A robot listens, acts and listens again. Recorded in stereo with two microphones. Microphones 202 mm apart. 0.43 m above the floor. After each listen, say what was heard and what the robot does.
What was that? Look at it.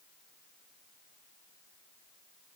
Keep listening.
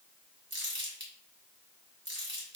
The crumpling: about 65° right or 115° right. Turn 65° right.
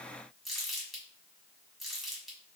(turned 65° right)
Facing the crumpling, 1 to 2 m away.